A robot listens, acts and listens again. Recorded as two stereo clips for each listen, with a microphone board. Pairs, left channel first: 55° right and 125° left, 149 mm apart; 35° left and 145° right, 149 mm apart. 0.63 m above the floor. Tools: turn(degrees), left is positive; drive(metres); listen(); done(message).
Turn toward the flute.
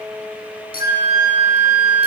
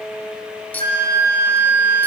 turn(degrees=-170)
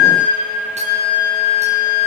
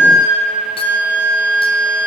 turn(degrees=-40)
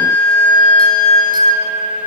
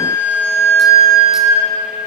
done("Facing the flute.")